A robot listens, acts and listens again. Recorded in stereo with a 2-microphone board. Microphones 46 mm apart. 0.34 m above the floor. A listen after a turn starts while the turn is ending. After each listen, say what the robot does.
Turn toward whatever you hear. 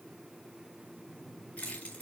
Turn 30° left.
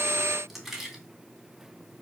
Facing the keys jangling, 2 to 4 m away.